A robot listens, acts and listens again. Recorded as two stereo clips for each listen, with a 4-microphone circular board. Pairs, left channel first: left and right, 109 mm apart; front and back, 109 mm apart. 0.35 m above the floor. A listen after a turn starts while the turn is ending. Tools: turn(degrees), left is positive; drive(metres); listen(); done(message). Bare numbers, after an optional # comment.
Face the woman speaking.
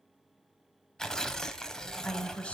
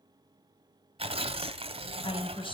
# The woman speaking: 15° left.
turn(15)
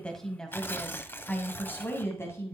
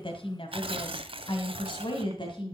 # The woman speaking is now 30° left.
turn(30)
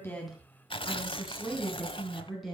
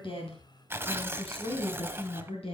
done("Facing the woman speaking.")